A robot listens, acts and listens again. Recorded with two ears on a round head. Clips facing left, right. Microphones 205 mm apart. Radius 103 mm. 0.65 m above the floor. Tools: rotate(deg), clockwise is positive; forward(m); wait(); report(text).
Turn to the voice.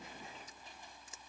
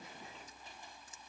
wait()
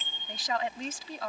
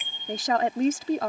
rotate(40)
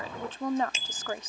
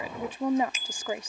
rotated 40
rotate(15)
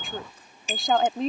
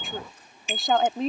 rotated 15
report("Found it: a woman speaking, straight ahead.")